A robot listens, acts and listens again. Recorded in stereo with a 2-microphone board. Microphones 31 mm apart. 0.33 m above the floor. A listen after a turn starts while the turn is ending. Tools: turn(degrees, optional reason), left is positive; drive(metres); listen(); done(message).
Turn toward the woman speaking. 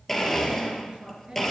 turn(degrees=-30, reason="The woman speaking: about 30° right or 150° right.")
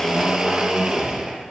listen()
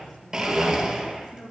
done("Facing the woman speaking, over 4 m away.")